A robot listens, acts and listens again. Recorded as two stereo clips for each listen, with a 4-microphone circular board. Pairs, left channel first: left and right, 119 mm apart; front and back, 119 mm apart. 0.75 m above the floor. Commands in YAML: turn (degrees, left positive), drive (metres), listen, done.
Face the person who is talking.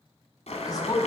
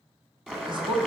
turn: 140
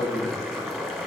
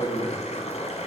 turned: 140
turn: 45
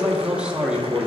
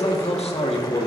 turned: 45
turn: -10
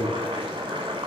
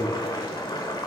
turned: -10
listen: true
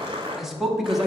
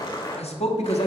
done: "Found it: a man speaking, straight ahead, 1 to 2 m away."